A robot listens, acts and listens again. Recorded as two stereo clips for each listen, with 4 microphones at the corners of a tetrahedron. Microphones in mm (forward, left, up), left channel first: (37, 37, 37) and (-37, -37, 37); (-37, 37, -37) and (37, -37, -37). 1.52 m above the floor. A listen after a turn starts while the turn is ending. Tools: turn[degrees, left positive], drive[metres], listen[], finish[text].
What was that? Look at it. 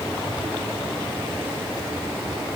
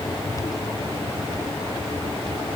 Action: listen[]
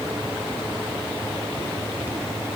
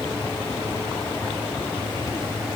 Action: listen[]
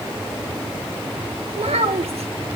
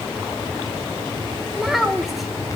Thought: The child speaking: 135° right.
Action: turn[-135]
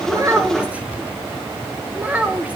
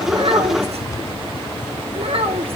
Thought: The child speaking is now 60° right.
Action: turn[-60]
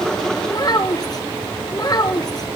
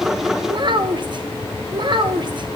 Action: finish[Facing the child speaking.]